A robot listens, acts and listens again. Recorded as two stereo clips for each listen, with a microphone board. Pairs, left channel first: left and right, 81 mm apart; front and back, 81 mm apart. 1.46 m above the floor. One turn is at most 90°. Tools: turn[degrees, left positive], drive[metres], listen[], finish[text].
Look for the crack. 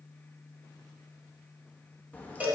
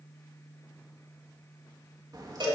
Thought: The crack: 155° left.
Action: turn[90]
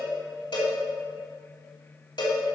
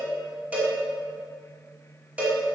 Thought: Nothing new. It was at 65° left.
Action: turn[65]
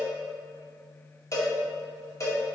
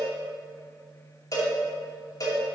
Action: finish[I heard a crack from this way, but can't make it out now.]